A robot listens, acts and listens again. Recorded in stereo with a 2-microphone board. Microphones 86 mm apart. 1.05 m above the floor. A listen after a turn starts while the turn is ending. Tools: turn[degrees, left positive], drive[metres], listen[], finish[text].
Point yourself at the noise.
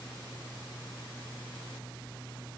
Action: listen[]
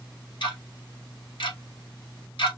Thought: The ticking: about 70° left or 110° left.
Action: turn[70]
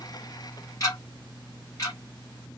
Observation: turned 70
Thought: So it is at 40° left.
Action: turn[40]
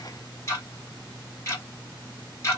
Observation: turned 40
Thought: The ticking is now 35° left.
Action: turn[35]
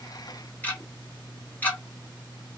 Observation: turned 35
Thought: The ticking is now 20° left.
Action: turn[20]
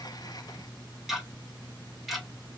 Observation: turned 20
Action: finish[Facing the ticking.]